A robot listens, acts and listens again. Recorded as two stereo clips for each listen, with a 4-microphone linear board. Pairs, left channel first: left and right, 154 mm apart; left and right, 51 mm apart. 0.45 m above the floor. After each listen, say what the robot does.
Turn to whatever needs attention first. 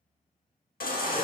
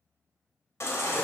Turn 75° left.
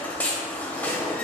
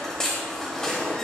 Turn 10° left.
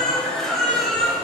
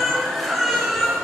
Facing the baby crying, under 1 m away.